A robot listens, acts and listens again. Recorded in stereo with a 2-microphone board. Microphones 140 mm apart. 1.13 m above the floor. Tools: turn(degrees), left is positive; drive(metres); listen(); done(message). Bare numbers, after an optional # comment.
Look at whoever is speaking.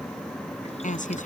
# The woman speaking: about 65° left or 115° left.
turn(65)
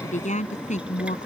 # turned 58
# So it is at 60° left.
turn(60)
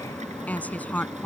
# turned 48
# The woman speaking is now 10° left.
turn(10)
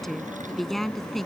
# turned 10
done("Found it: a woman speaking, straight ahead.")